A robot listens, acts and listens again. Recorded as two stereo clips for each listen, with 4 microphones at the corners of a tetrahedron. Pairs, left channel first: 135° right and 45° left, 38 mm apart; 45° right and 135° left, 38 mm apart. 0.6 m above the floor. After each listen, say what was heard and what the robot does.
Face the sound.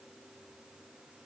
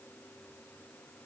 Keep listening.
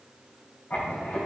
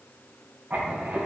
The writing: straight behind. Turn 180° left.
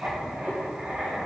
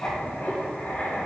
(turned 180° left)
Found it: writing, straight ahead, 2 to 4 m away.